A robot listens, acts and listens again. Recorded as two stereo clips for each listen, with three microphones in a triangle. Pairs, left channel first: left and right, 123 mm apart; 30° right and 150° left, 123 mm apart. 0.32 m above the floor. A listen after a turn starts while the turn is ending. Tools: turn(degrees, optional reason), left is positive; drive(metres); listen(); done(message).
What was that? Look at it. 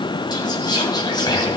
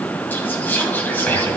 turn(degrees=45, reason="The whispering: 45° left.")
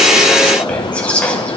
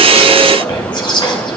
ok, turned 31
turn(degrees=10, reason="The whispering is now 10° left.")
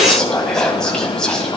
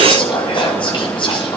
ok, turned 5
done("Found it: whispering, straight ahead, 2 to 4 m away.")